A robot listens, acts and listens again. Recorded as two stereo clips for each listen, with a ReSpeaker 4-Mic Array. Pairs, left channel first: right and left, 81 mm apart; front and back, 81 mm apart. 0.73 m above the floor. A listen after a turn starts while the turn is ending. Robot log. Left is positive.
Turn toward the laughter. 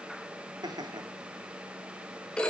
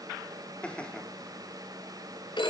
note: The laughter: 75° left.
cmd yaw +75
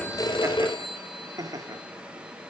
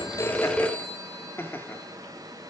note: The laughter is now 60° left.
cmd yaw +60
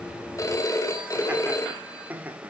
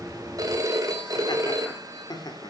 note: The laughter is now 25° left.
cmd yaw +25
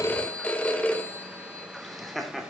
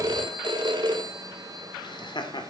end: Facing the laughter.